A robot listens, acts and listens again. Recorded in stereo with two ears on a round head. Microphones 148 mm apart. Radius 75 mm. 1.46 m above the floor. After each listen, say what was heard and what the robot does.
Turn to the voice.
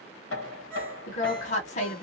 The woman speaking: about 40° left or 140° left. Turn 40° left.
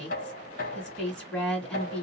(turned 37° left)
Found it: a woman speaking, straight ahead, 1 to 2 m away.